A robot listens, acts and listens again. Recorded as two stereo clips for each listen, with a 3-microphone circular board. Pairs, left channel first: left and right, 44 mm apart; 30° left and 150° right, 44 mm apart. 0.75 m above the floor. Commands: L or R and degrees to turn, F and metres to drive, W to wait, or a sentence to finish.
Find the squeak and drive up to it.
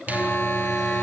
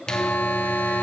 W
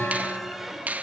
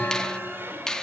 W
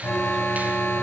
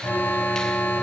I can't make out a squeak to turn to.